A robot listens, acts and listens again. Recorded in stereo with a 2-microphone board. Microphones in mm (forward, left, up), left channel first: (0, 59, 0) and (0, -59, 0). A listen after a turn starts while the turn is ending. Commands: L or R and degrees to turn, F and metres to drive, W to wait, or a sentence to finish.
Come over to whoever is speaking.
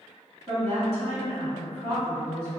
R60
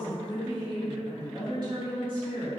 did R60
R45
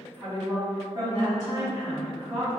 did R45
R25
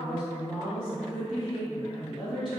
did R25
F1.0
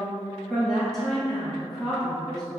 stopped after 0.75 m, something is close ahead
Arrived at the woman speaking, straight ahead.